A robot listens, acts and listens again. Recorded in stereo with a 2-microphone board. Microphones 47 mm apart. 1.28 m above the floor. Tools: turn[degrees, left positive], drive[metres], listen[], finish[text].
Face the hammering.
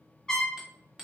Action: turn[-30]
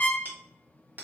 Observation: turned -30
Thought: So it is at 140° right.
Action: turn[-140]
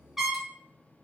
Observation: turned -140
Action: listen[]
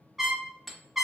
Action: finish[Facing the hammering.]